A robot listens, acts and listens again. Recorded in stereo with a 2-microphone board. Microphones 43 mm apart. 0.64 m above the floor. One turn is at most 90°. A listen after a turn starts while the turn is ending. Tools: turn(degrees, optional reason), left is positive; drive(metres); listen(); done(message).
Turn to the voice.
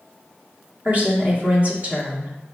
turn(degrees=-35, reason="The woman speaking: about 35° right or 145° right.")
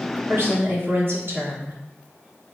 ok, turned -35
turn(degrees=-90, reason="So it is at 105° right.")
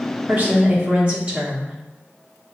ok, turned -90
turn(degrees=-30, reason="The woman speaking is now 30° right.")
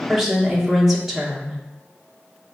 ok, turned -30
turn(degrees=-10, reason="The woman speaking is now 10° right.")
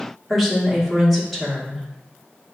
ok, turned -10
done("Found it: a woman speaking, straight ahead, 1 to 2 m away.")